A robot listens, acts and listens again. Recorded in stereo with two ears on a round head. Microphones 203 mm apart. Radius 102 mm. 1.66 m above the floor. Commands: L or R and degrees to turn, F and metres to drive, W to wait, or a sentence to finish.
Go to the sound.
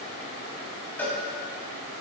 L30
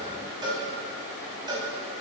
R20
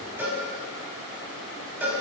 R10
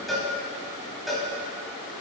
F1.0
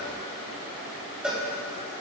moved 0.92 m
F1.0
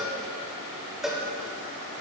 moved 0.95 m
F1.0
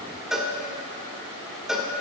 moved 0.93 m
F1.0
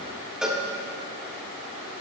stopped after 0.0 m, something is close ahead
I am next to the cowbell.